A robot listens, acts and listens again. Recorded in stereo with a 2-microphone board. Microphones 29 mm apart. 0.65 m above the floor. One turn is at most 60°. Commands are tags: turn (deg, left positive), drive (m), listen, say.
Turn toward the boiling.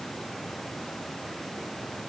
<listen/>
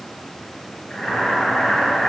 <turn deg="25"/>
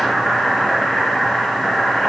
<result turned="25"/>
<say>Facing the boiling, over 4 m away.</say>